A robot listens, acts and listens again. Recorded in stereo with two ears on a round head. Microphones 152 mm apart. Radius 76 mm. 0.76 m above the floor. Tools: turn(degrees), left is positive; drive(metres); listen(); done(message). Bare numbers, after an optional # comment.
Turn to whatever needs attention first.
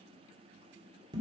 listen()
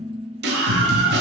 # The scream: about 70° right or 110° right.
turn(-70)
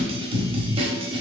# So it is at 35° right.
turn(-35)
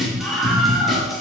done("Facing the scream.")